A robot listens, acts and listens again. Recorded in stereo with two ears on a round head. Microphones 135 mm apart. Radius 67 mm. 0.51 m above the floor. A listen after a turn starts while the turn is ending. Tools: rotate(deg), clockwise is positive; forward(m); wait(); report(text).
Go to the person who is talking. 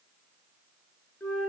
wait()
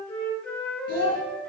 rotate(75)
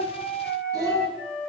rotate(25)
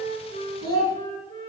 rotate(-35)
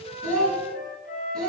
rotate(-10)
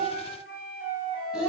forward(1.0)
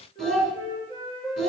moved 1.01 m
forward(1.0)
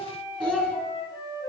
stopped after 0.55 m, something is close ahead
rotate(-10)
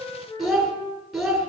report("Arrived at the child speaking, straight ahead.")